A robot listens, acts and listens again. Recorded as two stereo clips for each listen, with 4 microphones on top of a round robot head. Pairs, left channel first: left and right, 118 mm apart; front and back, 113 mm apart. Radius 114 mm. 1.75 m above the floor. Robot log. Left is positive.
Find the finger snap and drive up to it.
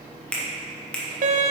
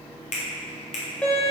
note: The finger snap: 10° left.
cmd yaw +10
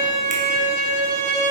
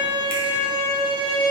cmd idle
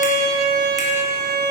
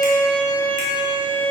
cmd idle
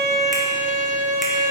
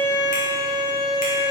end: Facing where the finger snap came from. I can't hear it now. I did not reach it.